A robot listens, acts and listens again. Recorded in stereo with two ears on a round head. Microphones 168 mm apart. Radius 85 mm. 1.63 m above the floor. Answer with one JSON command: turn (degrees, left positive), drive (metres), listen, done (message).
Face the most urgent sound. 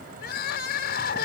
{"turn": 60}
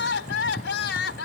{"turn": 65}
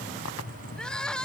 {"done": "Found it: crying, straight ahead."}